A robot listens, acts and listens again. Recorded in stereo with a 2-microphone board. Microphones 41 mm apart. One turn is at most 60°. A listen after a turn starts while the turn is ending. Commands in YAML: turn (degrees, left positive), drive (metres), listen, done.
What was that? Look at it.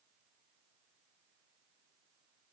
listen: true
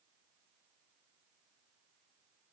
listen: true
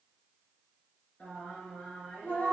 turn: 40
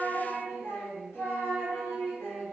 turn: 60
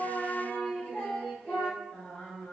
turn: 45
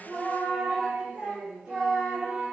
turn: -20
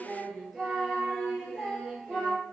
done: "Found it: singing, straight ahead, 1 to 2 m away."